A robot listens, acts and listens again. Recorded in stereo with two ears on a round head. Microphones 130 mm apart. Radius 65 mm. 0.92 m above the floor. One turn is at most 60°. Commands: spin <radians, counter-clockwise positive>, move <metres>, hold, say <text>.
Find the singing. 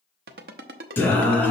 spin 0.52
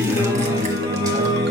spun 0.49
spin -0.52
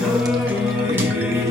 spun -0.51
spin -0.35
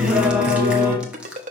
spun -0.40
spin -0.26
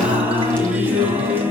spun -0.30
spin -0.26
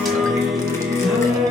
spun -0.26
say Found it: singing, straight ahead.